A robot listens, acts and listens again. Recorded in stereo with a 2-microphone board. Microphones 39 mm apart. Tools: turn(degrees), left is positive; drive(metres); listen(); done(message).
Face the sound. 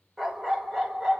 turn(degrees=-30)
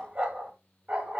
turn(degrees=-140)
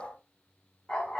turn(degrees=20)
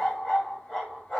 done("Facing the dog barking.")